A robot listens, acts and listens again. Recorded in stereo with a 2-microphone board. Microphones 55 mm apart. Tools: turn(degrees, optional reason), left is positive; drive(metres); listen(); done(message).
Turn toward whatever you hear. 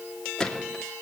turn(degrees=30)
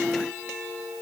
listen()
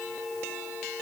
done("I heard a gunshot, but can't make it out now. It was about 20° right or 140° left.")